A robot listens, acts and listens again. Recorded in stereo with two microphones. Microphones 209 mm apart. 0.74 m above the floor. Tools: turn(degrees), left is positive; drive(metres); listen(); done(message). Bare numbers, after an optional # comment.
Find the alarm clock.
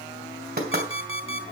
turn(-90)
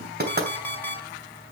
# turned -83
# So it is at 10° left.
turn(10)
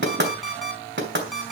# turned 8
done("Facing the alarm clock.")